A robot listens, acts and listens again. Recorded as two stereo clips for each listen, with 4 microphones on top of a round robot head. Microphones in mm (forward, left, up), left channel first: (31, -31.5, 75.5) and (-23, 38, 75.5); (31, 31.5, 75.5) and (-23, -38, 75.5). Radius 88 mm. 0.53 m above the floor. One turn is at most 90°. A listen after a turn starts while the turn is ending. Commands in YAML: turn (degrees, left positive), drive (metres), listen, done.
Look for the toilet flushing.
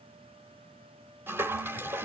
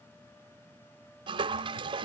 turn: -90
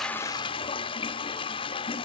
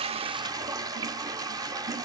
turn: -80
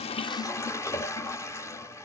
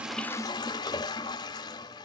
turn: 10
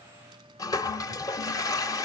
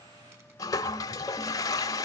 done: "Found it: a toilet flushing, straight ahead, under 1 m away."